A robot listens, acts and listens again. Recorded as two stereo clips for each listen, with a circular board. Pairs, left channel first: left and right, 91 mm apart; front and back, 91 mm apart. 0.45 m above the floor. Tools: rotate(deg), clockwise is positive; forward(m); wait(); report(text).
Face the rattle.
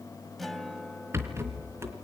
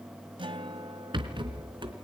rotate(150)
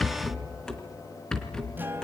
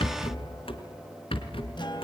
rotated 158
report("Found it: a rattle, straight ahead.")